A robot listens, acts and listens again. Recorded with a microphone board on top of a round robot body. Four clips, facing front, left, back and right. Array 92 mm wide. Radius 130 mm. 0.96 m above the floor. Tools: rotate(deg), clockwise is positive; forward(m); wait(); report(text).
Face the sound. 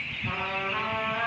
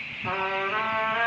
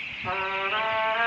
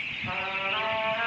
rotate(-130)
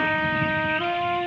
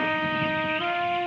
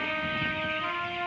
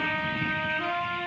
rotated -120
rotate(-10)
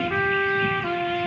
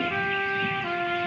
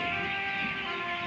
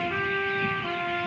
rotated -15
report("Facing the trumpet, 2 to 4 m away.")